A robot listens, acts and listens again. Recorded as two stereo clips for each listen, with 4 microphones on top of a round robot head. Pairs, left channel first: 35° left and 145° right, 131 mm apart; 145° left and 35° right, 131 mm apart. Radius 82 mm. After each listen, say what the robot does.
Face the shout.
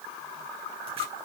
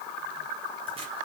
Keep listening.
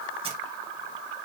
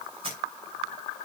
Keep listening.
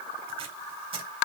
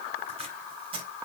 I can't make out a shout to turn to.